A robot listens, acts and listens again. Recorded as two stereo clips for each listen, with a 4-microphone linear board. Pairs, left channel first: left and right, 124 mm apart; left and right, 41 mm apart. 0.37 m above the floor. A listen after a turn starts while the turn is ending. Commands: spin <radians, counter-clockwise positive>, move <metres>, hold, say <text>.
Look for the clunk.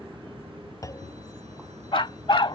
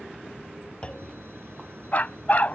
spin 0.44
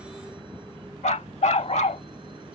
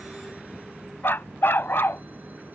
hold
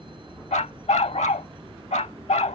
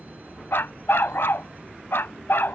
say I heard a clunk, but can't make it out now. It was about straight ahead or 130° left.